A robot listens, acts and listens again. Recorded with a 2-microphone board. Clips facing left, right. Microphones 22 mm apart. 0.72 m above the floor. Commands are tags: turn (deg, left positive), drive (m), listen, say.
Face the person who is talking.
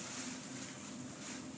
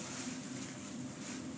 <listen/>
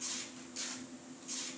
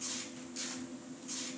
<listen/>
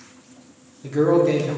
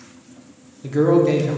<turn deg="-30"/>
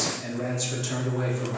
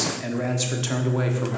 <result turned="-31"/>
<turn deg="-145"/>
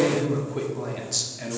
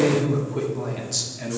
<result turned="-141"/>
<say>Found it: a man speaking, straight ahead, 1 to 2 m away.</say>